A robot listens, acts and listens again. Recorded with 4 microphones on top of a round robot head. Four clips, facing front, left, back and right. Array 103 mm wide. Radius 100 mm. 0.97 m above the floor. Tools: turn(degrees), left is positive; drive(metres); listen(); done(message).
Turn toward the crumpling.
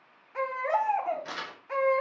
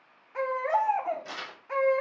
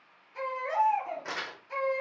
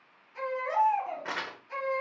turn(degrees=-115)
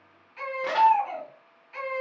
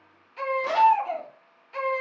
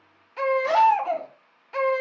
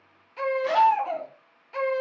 listen()
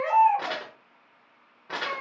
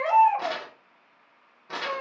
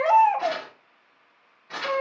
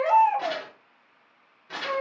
turn(degrees=25)
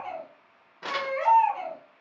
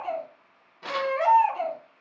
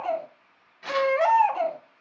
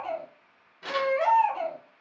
turn(degrees=15)
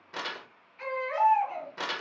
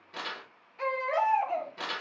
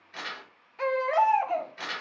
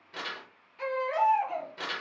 done("Facing the crumpling, 1 to 2 m away.")